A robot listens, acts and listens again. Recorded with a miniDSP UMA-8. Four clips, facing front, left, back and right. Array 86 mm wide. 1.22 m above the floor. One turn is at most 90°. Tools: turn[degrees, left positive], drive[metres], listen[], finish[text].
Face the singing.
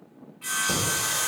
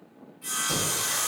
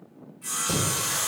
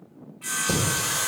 Thought: The singing: 85° right.
Action: turn[-85]
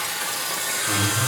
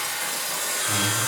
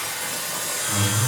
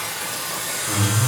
Thought: The singing is now 10° right.
Action: turn[-10]
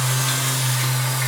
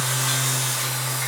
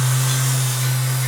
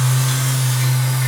Action: finish[Facing the singing.]